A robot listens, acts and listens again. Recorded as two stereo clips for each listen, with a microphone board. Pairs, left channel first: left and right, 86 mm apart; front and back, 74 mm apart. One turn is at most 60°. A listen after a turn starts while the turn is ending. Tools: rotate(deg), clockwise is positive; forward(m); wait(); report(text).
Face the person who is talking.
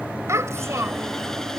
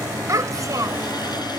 rotate(60)
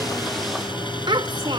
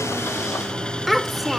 rotate(60)
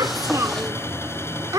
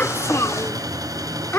rotate(50)
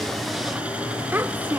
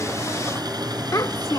rotate(30)
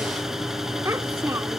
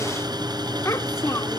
wait()
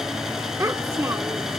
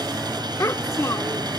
rotate(40)
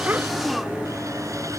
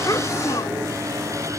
wait()
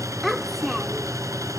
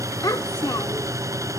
report("Found it: a child speaking, straight ahead.")